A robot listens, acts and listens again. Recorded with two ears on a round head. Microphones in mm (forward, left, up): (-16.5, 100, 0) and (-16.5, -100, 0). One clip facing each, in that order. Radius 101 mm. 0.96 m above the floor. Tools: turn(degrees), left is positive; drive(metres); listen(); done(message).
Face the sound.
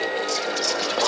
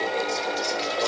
turn(degrees=70)
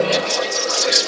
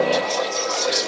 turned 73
turn(degrees=30)
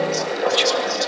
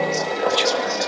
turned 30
done("Facing the whispering, 1 to 2 m away.")